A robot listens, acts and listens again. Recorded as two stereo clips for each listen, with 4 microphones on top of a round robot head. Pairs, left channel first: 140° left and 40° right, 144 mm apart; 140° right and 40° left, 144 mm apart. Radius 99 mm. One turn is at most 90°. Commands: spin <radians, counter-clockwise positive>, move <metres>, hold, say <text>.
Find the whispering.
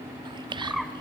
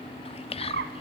spin -1.57
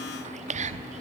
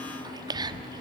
spin -0.26
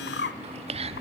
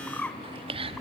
say Found it: whispering, straight ahead, 1 to 2 m away.